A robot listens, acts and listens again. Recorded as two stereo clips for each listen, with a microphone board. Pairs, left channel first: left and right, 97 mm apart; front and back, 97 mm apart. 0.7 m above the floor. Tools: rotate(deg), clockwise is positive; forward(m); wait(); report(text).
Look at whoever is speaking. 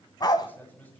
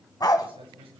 rotate(-160)
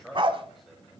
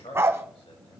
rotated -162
report("Facing the man speaking.")